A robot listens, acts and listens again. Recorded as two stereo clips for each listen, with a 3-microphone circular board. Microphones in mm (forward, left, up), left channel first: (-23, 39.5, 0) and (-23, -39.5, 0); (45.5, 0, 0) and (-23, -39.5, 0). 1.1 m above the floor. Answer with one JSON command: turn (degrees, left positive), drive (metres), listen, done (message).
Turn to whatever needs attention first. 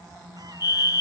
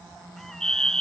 {"turn": 110}
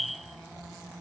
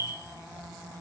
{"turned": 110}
{"done": "Facing the fire alarm."}